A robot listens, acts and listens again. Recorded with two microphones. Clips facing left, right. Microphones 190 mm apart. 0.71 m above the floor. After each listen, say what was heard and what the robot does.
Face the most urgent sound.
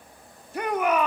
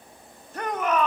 Turn 30° left.
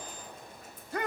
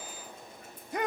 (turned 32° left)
So it is at 20° right. Turn 20° right.
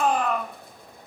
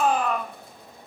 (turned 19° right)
Facing the shout.